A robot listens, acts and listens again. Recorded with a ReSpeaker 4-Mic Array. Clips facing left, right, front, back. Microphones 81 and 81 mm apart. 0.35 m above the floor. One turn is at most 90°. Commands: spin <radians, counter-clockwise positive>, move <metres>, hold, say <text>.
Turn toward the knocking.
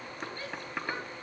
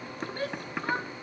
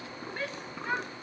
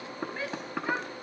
spin -1.57
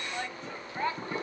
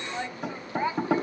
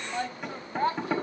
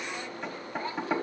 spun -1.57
spin -1.57
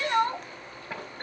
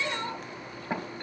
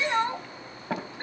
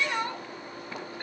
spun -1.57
spin -0.35
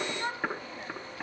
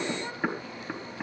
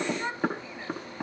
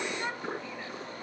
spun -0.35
say Facing the knocking, over 4 m away.